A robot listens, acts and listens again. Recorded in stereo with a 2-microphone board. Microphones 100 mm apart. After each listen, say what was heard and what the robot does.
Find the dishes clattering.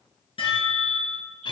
The dishes clattering: about 65° left or 115° left. Turn 65° left.
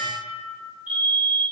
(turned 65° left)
So it is at 50° left. Turn 50° left.
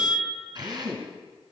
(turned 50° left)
Keep listening.
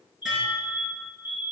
Facing the dishes clattering.